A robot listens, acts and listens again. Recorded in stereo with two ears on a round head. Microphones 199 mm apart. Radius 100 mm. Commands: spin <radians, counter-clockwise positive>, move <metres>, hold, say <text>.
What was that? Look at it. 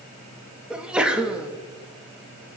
spin -0.52
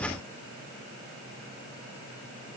hold
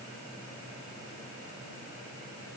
say I heard a sneeze, but can't make it out now. It was about 25° left or 145° right.